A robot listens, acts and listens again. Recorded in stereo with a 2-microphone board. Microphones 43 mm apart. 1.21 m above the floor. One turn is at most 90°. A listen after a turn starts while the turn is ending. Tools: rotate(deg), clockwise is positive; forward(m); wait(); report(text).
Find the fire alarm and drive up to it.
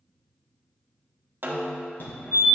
rotate(-55)
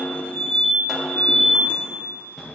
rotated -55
forward(1.0)
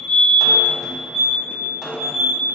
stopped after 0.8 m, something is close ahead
report("I am next to the fire alarm.")